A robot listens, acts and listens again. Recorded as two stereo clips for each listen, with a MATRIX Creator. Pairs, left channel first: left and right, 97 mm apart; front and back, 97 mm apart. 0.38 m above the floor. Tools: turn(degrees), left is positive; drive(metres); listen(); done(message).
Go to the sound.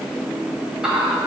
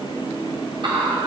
turn(degrees=-175)
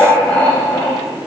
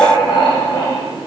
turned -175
turn(degrees=20)
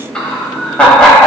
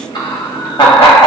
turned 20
turn(degrees=10)
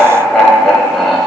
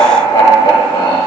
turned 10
drive(metres=1.0)
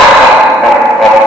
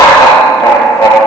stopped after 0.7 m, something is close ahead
done("I am next to the laughter.")